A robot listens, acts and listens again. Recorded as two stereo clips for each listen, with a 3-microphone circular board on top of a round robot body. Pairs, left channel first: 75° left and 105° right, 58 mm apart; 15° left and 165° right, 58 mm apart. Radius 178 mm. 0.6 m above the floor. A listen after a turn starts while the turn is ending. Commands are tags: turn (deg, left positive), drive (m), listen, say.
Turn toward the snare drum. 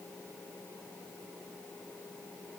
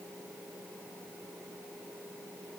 <listen/>
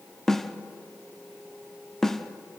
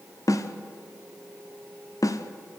<turn deg="-10"/>
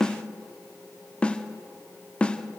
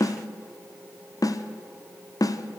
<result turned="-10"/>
<say>Found it: a snare drum, straight ahead, 1 to 2 m away.</say>